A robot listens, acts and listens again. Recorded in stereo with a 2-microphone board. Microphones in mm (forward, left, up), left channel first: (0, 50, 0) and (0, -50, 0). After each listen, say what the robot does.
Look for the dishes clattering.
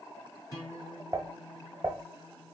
Turn 35° right.
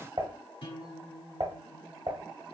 Turn 100° right.
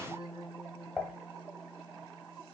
Found it: dishes clattering, straight ahead.